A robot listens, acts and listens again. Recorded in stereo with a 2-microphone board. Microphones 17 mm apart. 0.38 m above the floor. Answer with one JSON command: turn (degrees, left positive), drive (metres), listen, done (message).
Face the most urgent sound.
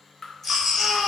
{"turn": -30}
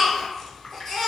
{"turn": 15}
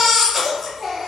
{"done": "Facing the baby crying."}